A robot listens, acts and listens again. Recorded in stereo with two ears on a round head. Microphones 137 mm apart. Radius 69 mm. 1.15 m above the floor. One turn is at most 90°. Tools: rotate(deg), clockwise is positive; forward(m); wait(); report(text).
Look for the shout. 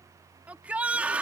rotate(30)
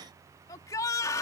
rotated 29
rotate(-20)
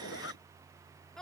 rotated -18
report("Found it: a shout, straight ahead.")